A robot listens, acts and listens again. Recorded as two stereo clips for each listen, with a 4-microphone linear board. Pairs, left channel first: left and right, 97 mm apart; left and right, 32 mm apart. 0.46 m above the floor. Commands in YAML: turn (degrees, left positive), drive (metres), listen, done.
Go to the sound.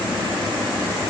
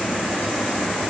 listen: true
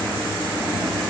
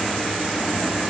listen: true
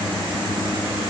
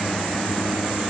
done: "I can't make out anything to turn to."